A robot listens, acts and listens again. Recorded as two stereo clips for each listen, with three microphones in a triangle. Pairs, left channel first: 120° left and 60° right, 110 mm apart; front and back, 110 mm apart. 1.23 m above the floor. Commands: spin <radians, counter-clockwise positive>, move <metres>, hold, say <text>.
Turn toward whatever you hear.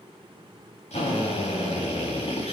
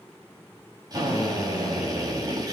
spin 2.18
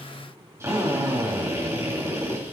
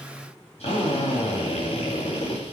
say Found it: a drill, straight ahead.